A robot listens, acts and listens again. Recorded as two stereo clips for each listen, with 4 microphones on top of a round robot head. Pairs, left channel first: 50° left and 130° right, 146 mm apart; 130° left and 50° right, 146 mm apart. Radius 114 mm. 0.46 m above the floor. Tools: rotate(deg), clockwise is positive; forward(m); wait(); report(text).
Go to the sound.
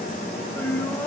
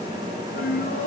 rotate(-125)
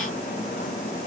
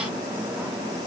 wait()
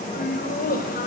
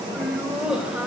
rotate(-35)
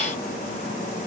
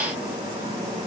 wait()
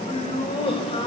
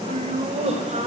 forward(1.0)
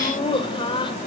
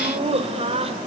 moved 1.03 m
forward(1.0)
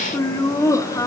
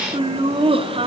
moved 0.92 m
rotate(15)
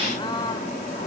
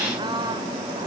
forward(1.0)
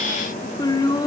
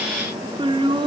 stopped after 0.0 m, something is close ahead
report("I am next to the laughter.")